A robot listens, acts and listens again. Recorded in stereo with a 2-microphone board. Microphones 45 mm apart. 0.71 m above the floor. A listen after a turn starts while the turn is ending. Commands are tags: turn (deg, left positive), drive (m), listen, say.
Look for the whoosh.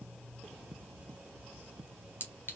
<listen/>
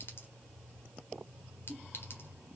<listen/>
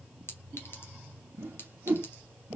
<turn deg="-55"/>
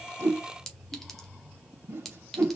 <turn deg="-70"/>
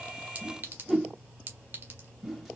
<turn deg="-10"/>
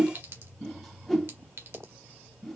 <say>Facing the whoosh, 1 to 2 m away.</say>